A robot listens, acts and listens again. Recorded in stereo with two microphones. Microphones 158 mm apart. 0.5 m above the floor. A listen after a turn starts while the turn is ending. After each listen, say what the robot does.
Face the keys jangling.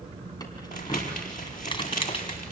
Turn 35° left.
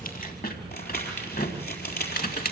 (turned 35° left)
Turn 105° left.
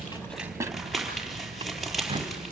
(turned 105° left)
Turn 35° right.
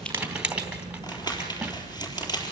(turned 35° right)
Found it: keys jangling, straight ahead.